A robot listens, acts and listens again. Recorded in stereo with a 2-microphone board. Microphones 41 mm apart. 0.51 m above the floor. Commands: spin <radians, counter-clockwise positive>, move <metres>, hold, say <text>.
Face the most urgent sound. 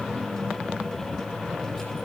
hold
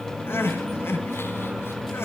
spin 1.57
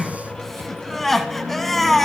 spin 0.17
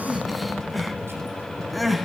say Facing the crying, 1 to 2 m away.